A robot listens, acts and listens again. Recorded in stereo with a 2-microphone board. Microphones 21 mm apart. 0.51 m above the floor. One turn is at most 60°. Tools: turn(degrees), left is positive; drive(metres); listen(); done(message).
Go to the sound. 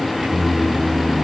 turn(degrees=-60)
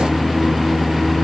turn(degrees=-20)
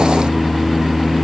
drive(metres=1.0)
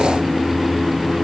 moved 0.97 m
turn(degrees=-10)
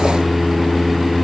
drive(metres=1.0)
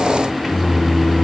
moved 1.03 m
drive(metres=1.0)
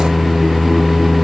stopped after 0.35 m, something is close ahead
done("I am next to the singing.")